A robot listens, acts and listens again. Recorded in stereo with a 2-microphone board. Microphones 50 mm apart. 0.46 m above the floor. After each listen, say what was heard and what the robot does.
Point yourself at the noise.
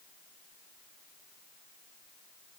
Keep listening.
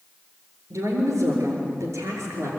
Turn 90° right.
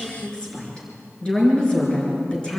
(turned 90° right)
So it is at 20° left. Turn 20° left.
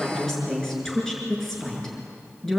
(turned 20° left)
Found it: a woman speaking, straight ahead.